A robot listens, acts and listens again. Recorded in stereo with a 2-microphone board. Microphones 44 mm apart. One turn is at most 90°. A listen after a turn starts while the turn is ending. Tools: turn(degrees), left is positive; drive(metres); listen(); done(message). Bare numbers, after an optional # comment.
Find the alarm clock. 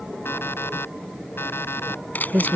# The alarm clock: about 65° left or 115° left.
turn(65)
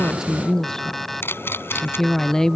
done("Found it: an alarm clock, straight ahead.")